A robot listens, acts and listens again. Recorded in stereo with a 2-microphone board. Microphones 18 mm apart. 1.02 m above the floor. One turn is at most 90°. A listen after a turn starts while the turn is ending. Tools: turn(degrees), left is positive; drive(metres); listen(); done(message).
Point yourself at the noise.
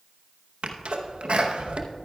turn(degrees=-65)
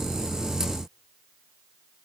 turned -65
listen()
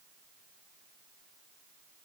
done("I heard a sneeze, but can't make it out now. It was about straight ahead or 50° right.")